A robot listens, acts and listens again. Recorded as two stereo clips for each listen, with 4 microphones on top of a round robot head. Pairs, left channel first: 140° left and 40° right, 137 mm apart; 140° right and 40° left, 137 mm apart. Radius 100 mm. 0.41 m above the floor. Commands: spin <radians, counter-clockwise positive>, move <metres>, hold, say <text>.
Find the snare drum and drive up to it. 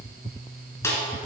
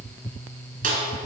spin 1.22
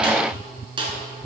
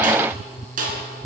spin 0.26
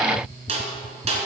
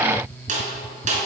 move 1.0
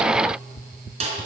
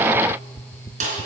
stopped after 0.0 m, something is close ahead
say Something is in my way. I am facing the snare drum but have not reached it.